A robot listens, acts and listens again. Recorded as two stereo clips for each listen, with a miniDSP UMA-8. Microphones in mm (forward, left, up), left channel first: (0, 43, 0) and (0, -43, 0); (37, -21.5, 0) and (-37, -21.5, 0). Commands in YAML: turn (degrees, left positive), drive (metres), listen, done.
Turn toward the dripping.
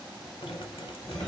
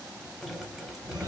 turn: 90
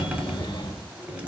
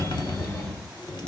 turn: -15
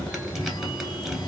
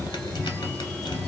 done: "Found it: dripping, straight ahead."